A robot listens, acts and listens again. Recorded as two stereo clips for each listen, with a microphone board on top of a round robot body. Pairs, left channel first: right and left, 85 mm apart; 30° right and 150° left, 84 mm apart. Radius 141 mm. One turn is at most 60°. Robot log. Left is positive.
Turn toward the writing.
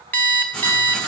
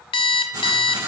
note: The writing: 170° right.
cmd yaw -60
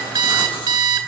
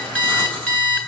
note: The writing is now 105° right.
cmd yaw -60
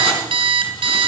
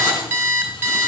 note: The writing is now 65° right.
cmd yaw -60
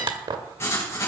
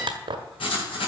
note: The writing is now 30° right.
cmd yaw -30
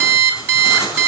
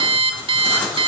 end: Facing the writing, over 4 m away.